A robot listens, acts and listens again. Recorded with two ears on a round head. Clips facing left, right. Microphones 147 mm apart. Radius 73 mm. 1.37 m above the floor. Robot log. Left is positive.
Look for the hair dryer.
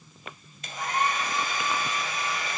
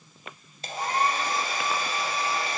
note: The hair dryer: about 30° right or 150° right.
cmd yaw -30
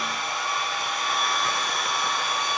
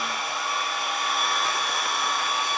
end: Facing the hair dryer.